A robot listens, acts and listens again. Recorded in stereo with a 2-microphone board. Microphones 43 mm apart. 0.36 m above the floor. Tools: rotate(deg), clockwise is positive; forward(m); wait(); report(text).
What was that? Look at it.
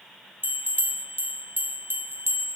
rotate(60)
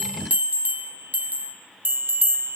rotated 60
rotate(50)
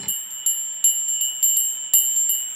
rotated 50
rotate(10)
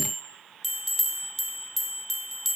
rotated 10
report("Found it: a bell, straight ahead, 2 to 4 m away.")